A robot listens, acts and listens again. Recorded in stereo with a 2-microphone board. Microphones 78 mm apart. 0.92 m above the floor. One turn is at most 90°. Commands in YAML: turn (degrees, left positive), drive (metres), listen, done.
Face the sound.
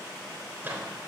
turn: -25
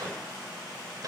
turn: -90
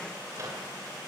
turn: -45
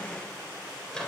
turn: 10
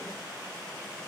listen: true
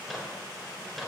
done: "Facing the microwave, 2 to 4 m away."